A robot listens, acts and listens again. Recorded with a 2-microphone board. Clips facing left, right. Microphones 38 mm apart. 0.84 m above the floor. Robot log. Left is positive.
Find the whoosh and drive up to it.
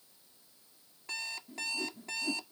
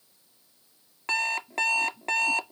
note: The whoosh: about 60° left or 120° left.
cmd yaw +60
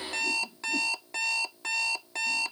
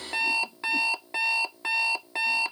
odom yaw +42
cmd idle
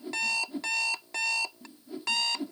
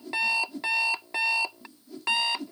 note: So it is at 25° left.
cmd yaw +25
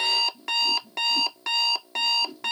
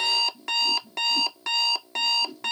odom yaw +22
cmd fwd 1.0
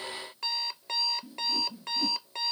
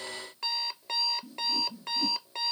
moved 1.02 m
note: The whoosh is now 15° left.
cmd yaw +15
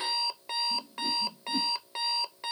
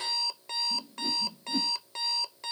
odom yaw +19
cmd fwd 1.0
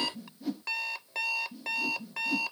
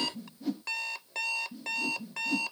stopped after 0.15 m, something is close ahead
end: I am next to the whoosh.